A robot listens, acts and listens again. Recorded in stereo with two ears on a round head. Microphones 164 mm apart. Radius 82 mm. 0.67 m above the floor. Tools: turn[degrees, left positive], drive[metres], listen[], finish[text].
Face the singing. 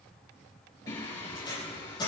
Thought: The singing: about 25° left or 155° left.
Action: turn[25]
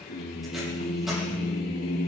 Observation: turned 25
Thought: So it is at 115° left.
Action: turn[115]
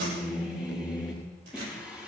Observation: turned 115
Action: finish[Found it: singing, straight ahead, over 4 m away.]